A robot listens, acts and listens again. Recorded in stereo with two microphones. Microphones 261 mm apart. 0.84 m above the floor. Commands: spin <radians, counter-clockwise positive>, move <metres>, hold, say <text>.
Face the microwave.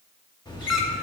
spin 0.26
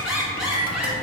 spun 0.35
spin 2.53
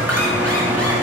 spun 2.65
say Found it: a microwave, straight ahead.